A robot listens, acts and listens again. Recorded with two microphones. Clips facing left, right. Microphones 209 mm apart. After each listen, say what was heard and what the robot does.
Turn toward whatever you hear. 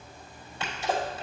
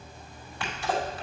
The sneeze: about 25° left or 155° left. Turn 25° left.
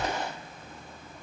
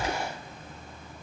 So it is at 130° left. Turn 130° left.
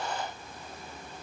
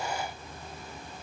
I heard a sneeze from this way, but can't make it out now.